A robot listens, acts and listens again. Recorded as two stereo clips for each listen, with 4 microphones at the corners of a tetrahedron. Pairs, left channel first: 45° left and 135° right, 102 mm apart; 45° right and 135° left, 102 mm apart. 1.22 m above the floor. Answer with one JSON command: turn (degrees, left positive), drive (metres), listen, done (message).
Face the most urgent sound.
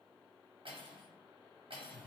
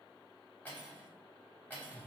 {"listen": true}
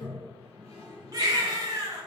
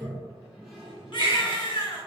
{"turn": -85}
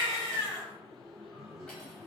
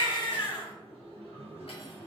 {"done": "Found it: a baby crying, straight ahead, under 1 m away."}